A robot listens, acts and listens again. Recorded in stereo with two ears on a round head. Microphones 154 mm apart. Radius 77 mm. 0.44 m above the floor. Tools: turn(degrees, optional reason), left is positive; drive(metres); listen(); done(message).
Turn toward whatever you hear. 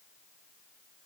listen()
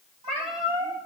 turn(degrees=-40, reason="The cat meowing: about 40° right or 140° right.")
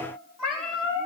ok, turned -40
done("Found it: a cat meowing, straight ahead, over 4 m away.")